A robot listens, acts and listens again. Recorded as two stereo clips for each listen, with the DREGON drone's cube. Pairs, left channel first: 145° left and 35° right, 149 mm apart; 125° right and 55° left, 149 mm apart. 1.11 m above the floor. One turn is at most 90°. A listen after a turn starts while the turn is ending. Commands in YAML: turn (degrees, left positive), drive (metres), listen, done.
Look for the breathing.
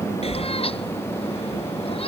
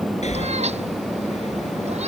turn: -90
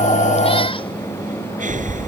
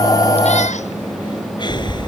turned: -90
turn: -65
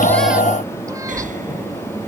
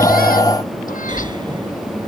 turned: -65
done: "Found it: breathing, straight ahead."